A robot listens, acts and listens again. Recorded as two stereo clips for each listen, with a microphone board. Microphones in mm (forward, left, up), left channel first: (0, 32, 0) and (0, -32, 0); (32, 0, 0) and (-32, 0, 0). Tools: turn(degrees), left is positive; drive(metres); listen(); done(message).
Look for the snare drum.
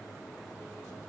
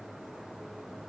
listen()
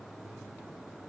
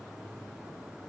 listen()
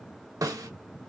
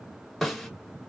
turn(degrees=-85)
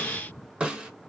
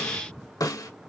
turn(degrees=-15)
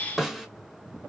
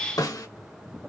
done("Found it: a snare drum, straight ahead, 1 to 2 m away.")